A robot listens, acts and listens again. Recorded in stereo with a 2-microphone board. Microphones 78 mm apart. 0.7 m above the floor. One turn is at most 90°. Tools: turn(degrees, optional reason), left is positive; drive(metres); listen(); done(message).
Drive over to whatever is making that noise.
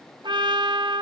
turn(degrees=-90)
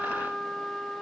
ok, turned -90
drive(metres=1.0)
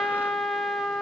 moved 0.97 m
drive(metres=1.0)
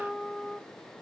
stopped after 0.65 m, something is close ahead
done("Arrived at the trumpet, straight ahead.")